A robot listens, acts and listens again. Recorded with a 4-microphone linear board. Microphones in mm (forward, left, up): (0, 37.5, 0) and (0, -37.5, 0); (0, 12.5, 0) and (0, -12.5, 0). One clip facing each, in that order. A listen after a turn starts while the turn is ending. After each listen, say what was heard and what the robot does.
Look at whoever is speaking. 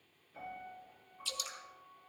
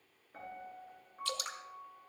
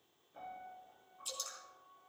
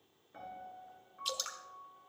Keep listening.
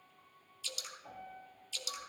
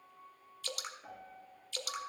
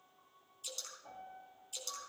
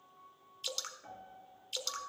Keep listening.
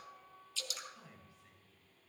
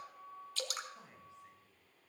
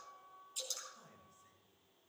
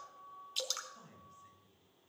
The man speaking: about 25° right or 155° right. Turn 25° right.
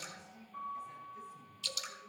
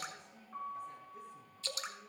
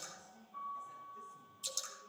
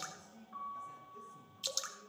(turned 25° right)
So it is at 125° right. Turn 125° right.
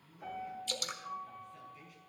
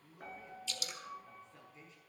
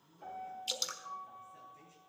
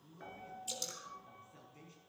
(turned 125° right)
The man speaking is now 25° right. Turn 25° right.
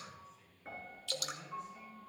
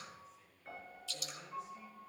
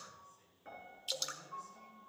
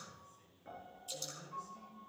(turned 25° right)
Found it: a man speaking, straight ahead.